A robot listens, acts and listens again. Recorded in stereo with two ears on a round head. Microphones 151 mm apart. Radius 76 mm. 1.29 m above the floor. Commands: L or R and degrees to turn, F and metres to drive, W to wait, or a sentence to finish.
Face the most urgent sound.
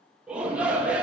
R30
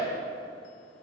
L25
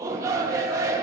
R20
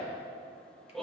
Facing the shout, 1 to 2 m away.